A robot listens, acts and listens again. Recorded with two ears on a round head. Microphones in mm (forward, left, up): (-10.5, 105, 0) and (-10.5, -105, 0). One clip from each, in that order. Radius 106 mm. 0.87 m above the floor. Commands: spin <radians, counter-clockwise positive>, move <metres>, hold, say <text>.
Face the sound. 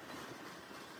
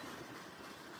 hold
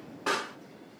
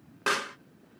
spin -0.79
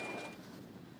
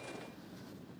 hold
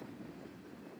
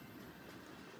say I heard a pop, but can't make it out now. It was about straight ahead or 90° right.